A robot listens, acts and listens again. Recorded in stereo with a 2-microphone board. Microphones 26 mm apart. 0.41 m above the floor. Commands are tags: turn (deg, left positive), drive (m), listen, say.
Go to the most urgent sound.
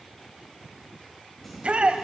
<turn deg="-45"/>
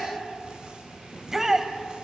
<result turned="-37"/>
<turn deg="-15"/>
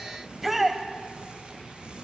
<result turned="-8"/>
<drive m="1.0"/>
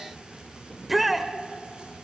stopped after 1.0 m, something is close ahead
<turn deg="-10"/>
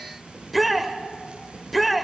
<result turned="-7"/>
<say>Arrived at the shout, straight ahead.</say>